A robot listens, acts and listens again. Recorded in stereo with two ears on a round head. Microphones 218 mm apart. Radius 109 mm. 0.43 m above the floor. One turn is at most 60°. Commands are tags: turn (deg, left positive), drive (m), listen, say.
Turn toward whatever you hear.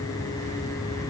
<listen/>
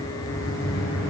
<turn deg="55"/>
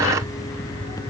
<listen/>
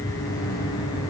<listen/>
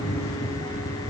<say>I heard a microwave, but can't make it out now. It was about straight ahead or 70° left.</say>